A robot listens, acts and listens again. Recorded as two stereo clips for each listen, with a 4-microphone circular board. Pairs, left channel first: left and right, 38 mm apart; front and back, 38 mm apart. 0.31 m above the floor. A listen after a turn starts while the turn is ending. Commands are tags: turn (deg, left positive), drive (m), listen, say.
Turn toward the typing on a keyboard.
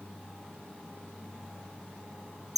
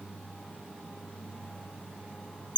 <listen/>
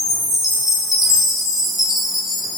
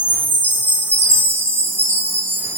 <listen/>
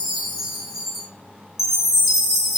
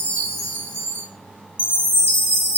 <say>I can't make out typing on a keyboard, only a chime.</say>